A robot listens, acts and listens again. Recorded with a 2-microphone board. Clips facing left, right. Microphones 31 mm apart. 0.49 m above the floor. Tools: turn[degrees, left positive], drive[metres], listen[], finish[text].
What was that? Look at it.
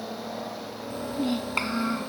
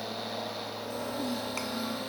Thought: The child speaking: about 50° left or 130° left.
Action: turn[50]
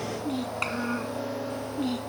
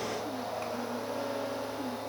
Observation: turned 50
Thought: So it is at 70° left.
Action: turn[70]
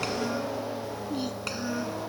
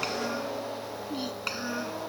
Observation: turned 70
Thought: The child speaking is now 10° right.
Action: turn[-10]
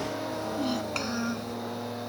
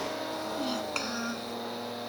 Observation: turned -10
Action: finish[Facing the child speaking.]